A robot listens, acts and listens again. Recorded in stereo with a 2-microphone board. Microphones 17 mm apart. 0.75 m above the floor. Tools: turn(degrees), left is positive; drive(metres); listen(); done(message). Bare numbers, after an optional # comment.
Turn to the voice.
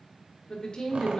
# The woman speaking: about 50° left or 130° left.
turn(50)
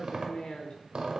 # So it is at 60° left.
turn(60)
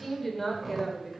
# The woman speaking is now 10° left.
turn(10)
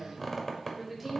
done("Facing the woman speaking.")